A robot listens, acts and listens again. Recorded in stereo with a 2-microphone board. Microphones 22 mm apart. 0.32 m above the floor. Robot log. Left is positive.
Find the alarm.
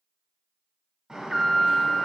note: The alarm: about 20° right or 160° right.
cmd yaw -20
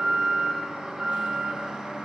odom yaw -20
note: So it is at 130° right.
cmd yaw -130
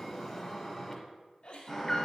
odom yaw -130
note: The alarm is now 15° left.
cmd yaw +15
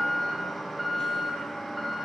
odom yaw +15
end: Found it: an alarm, straight ahead, 1 to 2 m away.